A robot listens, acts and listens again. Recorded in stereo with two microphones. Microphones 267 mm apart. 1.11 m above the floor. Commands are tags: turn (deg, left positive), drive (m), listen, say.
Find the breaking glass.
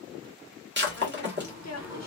<turn deg="-40"/>
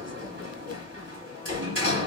<listen/>
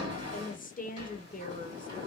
<say>I heard breaking glass, but can't make it out now. It was about straight ahead or 100° right.</say>